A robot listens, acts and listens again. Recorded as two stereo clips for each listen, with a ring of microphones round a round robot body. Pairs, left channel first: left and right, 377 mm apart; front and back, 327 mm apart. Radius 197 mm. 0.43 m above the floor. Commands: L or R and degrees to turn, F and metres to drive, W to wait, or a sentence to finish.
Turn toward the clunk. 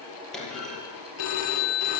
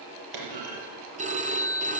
L180
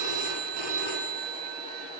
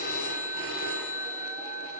I heard a clunk from this way, but can't make it out now.